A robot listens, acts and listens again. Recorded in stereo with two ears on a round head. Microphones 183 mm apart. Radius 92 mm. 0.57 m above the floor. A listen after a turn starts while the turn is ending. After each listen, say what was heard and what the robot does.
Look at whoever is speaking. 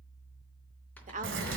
The woman speaking: about 40° right or 140° right. Turn 40° right.
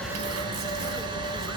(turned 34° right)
Keep listening.
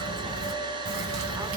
Keep listening.
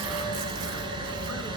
I heard a woman speaking, but can't make it out now. It was about 5° right or 105° right.